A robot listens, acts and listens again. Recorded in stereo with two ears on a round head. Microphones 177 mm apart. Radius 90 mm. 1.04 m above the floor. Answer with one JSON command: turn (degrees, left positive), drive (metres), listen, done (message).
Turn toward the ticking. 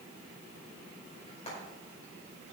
{"listen": true}
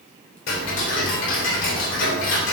{"turn": 65}
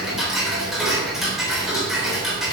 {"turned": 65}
{"done": "Facing the ticking, 2 to 4 m away."}